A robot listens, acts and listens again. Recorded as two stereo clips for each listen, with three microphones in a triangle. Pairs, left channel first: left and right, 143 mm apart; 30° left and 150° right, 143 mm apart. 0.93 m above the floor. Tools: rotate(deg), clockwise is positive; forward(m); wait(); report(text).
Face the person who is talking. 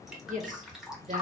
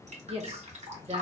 rotate(105)
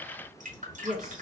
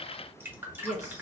report("Found it: a woman speaking, straight ahead.")